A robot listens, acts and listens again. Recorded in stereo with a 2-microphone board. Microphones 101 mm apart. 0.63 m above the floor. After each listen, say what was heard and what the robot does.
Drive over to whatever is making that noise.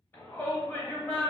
The shout: about 25° left or 155° left. Turn 25° left.
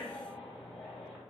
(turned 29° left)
Keep listening.
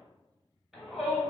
Drive 1.0 m forward.
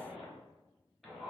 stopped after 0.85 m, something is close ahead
Arrived at the shout, straight ahead.